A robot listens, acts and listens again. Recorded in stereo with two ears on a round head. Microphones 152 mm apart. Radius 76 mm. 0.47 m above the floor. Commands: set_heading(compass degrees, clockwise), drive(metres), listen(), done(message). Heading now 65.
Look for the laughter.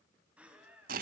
set_heading(95)
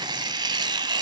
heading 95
listen()
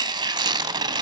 listen()
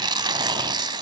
done("I heard laughter, but can't make it out now. It was about 20° left or 140° right.")